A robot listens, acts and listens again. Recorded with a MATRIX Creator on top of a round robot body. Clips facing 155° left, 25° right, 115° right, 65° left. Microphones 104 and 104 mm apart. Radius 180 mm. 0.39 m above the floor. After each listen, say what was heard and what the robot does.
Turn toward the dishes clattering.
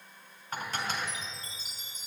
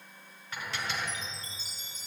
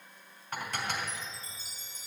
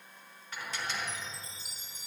The dishes clattering: 155° right. Turn 155° right.
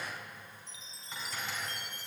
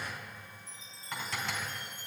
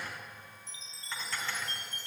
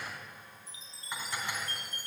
The dishes clattering is now 10° right. Turn 10° right.
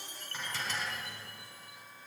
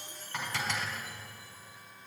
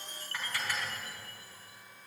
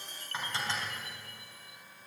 Facing the dishes clattering, 2 to 4 m away.